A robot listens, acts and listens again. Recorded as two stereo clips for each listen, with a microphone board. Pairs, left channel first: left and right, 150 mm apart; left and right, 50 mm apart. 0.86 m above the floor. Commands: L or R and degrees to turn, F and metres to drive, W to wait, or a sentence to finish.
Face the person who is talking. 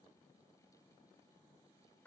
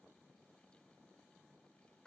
W
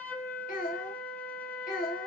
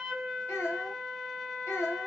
L90
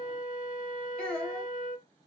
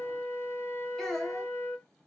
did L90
Found it: a child speaking, straight ahead, 2 to 4 m away.